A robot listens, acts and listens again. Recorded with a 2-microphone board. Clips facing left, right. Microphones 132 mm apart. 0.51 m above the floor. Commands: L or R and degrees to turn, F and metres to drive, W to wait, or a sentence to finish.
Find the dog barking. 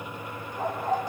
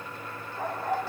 R30
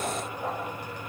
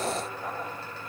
L25
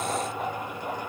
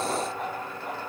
Found it: a dog barking, straight ahead.